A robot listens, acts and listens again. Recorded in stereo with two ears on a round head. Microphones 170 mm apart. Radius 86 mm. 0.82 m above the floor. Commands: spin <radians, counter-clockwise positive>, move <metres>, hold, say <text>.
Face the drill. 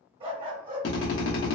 spin 1.31
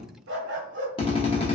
spin 0.52
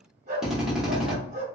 say Facing the drill.